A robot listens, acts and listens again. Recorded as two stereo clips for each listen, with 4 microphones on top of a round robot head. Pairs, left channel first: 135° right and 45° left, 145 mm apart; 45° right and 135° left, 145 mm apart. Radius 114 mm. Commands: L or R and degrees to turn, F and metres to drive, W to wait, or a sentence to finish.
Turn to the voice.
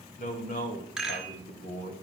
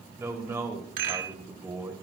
R155
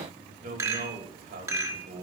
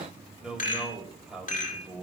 L50
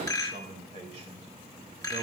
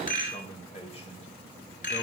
Facing the man speaking.